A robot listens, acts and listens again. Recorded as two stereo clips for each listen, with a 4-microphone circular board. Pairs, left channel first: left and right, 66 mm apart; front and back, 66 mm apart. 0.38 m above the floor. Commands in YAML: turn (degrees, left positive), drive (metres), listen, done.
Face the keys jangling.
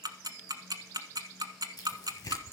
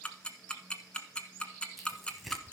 listen: true
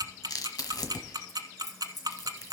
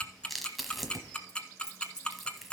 turn: 75
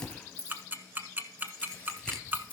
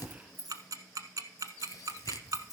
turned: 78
turn: 20
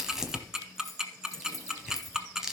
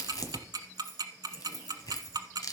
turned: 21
done: "Found it: keys jangling, straight ahead."